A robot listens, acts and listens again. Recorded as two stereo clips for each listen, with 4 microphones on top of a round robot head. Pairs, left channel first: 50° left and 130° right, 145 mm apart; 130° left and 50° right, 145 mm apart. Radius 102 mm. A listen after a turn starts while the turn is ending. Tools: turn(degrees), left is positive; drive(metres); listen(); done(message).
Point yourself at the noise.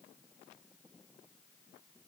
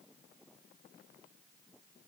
listen()
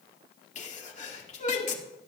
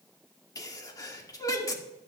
turn(degrees=70)
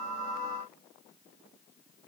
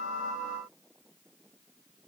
done("I heard a sneeze from this way, but can't make it out now.")